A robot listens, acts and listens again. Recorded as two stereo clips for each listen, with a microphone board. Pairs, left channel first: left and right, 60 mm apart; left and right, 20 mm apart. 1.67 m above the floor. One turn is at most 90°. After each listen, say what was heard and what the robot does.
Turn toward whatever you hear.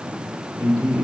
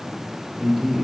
The man speaking: about 15° right or 165° right. Turn 15° right.
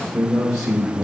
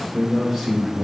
Turn 30° left.
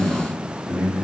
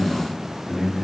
So it is at 25° right. Turn 25° right.
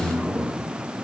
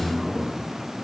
Found it: a man speaking, straight ahead, over 4 m away.